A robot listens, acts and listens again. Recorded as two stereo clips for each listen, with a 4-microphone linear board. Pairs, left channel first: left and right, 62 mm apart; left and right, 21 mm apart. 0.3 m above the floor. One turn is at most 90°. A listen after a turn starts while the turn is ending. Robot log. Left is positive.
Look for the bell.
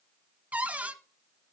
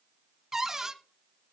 cmd idle
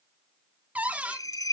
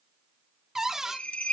cmd yaw +90
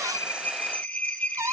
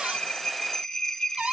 note: So it is at 15° left.
cmd yaw +15
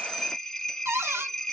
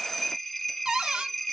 end: Facing the bell, 2 to 4 m away.